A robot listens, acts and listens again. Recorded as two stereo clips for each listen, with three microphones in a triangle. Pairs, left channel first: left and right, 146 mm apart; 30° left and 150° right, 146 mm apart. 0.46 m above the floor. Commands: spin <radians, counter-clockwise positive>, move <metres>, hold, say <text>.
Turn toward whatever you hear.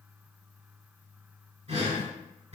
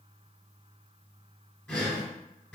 spin -0.96
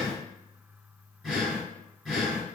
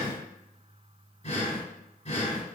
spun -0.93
say Facing the breathing, 1 to 2 m away.